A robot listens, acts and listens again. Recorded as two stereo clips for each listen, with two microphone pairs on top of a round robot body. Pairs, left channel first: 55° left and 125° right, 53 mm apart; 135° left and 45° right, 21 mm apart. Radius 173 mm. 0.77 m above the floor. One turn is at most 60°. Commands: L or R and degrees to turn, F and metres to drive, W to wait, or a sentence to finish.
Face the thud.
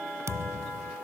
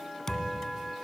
R60
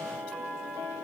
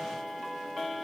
R60
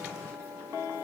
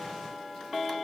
R35
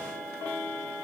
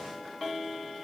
Facing where the thud came from. I can't hear it now.